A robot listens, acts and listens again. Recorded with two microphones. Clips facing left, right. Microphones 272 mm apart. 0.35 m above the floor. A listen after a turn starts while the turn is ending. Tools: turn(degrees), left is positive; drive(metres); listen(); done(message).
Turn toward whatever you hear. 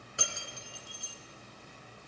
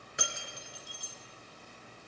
turn(degrees=-20)
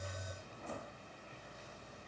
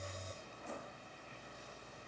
listen()
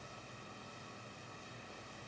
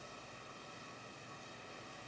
done("I heard breaking glass, but can't make it out now. It was about straight ahead or 140° right.")